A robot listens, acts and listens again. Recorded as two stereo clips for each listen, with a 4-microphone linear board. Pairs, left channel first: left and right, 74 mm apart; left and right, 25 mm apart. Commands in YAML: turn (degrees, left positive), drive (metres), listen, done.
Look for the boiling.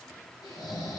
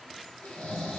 listen: true
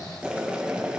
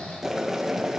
turn: -30
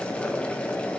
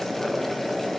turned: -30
turn: 15
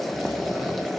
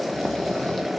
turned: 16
done: "Found it: boiling, straight ahead, 1 to 2 m away."